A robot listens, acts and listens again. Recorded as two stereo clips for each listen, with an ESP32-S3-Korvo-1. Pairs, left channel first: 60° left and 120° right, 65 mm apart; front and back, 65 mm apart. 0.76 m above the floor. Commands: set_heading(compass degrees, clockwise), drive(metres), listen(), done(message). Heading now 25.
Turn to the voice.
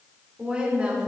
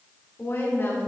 set_heading(75)
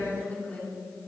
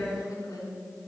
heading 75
done("Found it: a woman speaking, straight ahead, 2 to 4 m away.")